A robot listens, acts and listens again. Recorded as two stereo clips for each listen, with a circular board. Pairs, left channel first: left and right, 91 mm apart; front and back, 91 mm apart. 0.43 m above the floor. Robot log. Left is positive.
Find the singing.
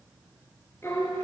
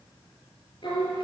note: The singing: 30° left.
cmd yaw +30
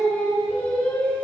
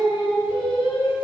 note: The singing is now 20° left.
cmd yaw +20
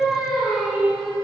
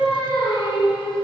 end: Facing the singing.